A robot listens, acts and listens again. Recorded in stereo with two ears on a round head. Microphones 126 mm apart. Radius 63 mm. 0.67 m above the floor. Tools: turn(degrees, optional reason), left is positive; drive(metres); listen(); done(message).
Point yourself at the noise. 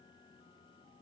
listen()
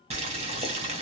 turn(degrees=-45, reason="The boiling: about 45° right or 135° right.")
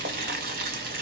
turn(degrees=-90, reason="So it is at 90° right.")
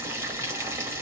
turn(degrees=-20, reason="The boiling is now 20° right.")
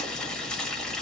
done("Facing the boiling.")